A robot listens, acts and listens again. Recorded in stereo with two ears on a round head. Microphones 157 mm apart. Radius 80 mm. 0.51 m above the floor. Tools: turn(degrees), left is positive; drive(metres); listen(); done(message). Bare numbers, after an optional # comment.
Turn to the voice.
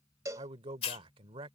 # The man speaking: about 30° right or 150° right.
turn(-30)
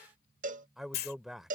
done("Found it: a man speaking, straight ahead.")